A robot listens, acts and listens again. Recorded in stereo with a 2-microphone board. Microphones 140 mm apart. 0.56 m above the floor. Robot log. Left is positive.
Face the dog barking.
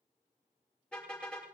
cmd idle
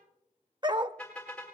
note: The dog barking: about 30° right or 150° right.
cmd yaw -30
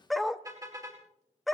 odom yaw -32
end: Found it: a dog barking, straight ahead, under 1 m away.